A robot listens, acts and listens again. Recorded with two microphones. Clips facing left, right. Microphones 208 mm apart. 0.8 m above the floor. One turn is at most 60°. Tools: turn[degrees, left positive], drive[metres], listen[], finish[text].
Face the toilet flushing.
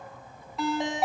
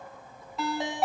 Action: listen[]
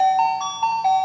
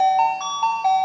Action: listen[]
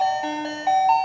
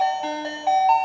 Action: finish[I can't make out a toilet flushing, only a ringtone.]